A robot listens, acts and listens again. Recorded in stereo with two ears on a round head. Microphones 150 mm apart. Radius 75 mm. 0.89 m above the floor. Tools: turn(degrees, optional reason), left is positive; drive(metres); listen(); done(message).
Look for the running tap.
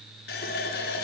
turn(degrees=65, reason="The running tap: about 65° left or 115° left.")
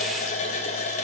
turn(degrees=45, reason="So it is at 45° left.")
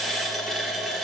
done("Found it: a running tap, straight ahead.")